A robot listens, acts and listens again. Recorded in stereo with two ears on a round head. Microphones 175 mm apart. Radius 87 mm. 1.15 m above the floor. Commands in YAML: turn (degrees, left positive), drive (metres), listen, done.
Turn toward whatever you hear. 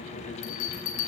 turn: 90
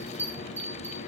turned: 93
turn: -10
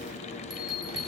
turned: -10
listen: true
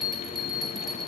done: "Found it: a bell, straight ahead, over 4 m away."